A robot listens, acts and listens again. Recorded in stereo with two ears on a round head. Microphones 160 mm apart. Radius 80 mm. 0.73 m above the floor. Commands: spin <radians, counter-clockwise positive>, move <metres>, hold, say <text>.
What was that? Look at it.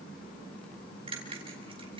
spin -0.52
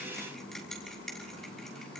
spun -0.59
say Found it: a bell, straight ahead.